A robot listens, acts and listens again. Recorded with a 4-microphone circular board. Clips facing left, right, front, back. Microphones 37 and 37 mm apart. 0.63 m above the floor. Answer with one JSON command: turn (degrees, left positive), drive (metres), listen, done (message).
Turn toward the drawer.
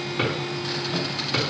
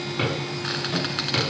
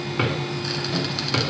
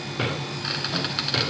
{"done": "Facing the drawer."}